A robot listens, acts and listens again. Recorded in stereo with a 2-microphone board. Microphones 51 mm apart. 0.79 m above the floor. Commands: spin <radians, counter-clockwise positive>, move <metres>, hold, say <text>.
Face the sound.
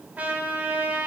spin -0.52
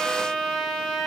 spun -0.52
say Facing the trumpet, 1 to 2 m away.